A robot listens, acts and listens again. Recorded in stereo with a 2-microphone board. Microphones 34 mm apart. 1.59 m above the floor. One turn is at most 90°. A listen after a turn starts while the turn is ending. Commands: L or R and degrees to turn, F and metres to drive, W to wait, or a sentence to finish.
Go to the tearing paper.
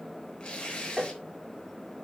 L30
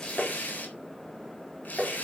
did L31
L90
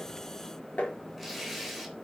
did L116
F1.0
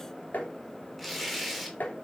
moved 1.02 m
F1.0
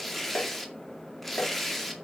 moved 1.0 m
L10
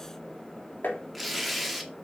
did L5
F1.0
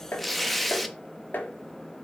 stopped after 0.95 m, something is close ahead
Arrived at the tearing paper, straight ahead.